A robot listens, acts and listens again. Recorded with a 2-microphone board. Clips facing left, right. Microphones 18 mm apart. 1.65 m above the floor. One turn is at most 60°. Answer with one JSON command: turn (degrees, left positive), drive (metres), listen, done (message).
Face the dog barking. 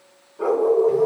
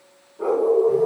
{"turn": 60}
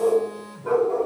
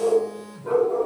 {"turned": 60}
{"turn": 35}
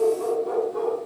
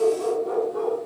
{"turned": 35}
{"done": "Found it: a dog barking, straight ahead."}